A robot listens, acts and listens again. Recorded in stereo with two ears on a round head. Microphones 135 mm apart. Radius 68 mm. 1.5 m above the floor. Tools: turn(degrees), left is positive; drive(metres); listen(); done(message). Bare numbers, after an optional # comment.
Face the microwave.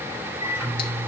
# The microwave: about 15° right or 165° right.
turn(-15)
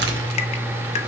done("Found it: a microwave, straight ahead.")